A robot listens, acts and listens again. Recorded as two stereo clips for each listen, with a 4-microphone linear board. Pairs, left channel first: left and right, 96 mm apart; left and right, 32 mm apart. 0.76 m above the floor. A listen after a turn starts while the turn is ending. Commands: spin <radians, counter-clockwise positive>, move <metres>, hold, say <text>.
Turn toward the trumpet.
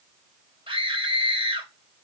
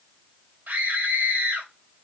hold
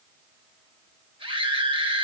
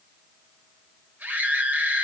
hold
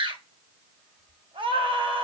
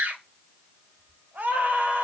say I can't make out a trumpet to turn to.